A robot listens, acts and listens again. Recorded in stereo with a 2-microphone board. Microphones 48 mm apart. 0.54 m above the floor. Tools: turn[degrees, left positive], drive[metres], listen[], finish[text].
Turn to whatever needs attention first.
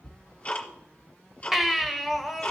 Action: turn[-30]
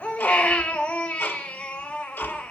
Thought: So it is at 25° left.
Action: turn[25]
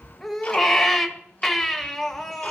Action: finish[Found it: a baby crying, straight ahead.]